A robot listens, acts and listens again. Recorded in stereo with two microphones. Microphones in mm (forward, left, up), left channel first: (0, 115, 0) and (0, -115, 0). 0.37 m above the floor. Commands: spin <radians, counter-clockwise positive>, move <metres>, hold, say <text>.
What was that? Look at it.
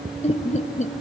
spin 0.61
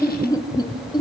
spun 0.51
spin 0.35
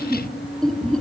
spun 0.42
say Facing the laughter, 2 to 4 m away.